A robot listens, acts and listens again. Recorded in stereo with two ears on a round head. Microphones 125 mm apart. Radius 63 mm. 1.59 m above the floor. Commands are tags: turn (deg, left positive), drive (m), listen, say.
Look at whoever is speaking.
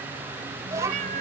<turn deg="-20"/>
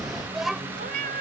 <say>Facing the child speaking.</say>